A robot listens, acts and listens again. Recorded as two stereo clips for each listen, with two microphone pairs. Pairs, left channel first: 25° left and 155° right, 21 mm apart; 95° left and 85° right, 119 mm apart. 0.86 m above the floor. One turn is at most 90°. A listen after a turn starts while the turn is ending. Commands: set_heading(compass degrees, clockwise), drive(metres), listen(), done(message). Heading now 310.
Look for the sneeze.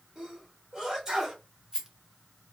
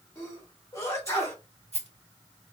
set_heading(220)
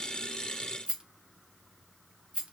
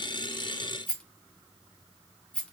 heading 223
set_heading(153)
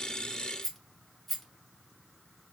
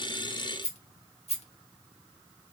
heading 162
done("Facing where the sneeze came from. I can't hear it now.")